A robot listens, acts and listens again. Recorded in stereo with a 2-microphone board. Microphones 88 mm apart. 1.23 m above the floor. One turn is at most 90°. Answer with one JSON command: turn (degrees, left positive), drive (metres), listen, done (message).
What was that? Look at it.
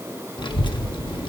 {"turn": 65}
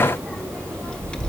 {"turn": 10}
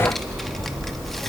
{"done": "Found it: a child speaking, straight ahead, 1 to 2 m away."}